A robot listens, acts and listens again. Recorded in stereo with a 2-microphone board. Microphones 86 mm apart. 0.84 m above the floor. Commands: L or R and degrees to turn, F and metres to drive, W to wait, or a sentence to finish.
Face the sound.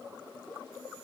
W
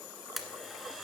L30
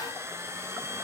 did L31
R35
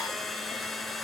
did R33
Found it: a blender, straight ahead.